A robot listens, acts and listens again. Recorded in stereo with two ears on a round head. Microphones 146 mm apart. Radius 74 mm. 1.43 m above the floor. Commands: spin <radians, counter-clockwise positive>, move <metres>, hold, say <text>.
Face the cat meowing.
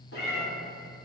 spin 1.57
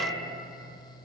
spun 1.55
say Facing the cat meowing.